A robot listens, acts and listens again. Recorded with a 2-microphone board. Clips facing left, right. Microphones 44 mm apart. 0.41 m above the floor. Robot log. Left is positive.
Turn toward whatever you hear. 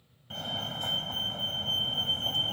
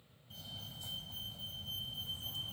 note: The fire alarm: about 60° left or 120° left.
cmd yaw +60
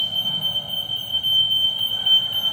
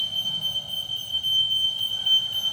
note: So it is at 30° left.
cmd yaw +30
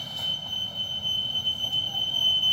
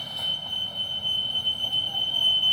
note: The fire alarm is now 10° right.
cmd yaw -10
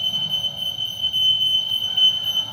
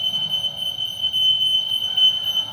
end: Found it: a fire alarm, straight ahead.